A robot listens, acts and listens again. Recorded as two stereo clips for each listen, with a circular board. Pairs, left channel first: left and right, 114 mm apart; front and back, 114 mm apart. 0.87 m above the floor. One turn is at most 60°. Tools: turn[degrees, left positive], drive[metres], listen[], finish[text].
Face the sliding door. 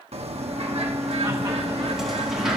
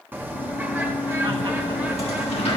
Action: finish[Facing the sliding door.]